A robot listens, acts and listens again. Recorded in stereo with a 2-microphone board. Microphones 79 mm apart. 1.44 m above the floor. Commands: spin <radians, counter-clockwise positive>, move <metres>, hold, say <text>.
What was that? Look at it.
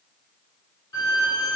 spin 0.87
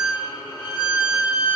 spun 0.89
spin 1.40
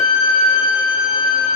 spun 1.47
say Facing the violin, 2 to 4 m away.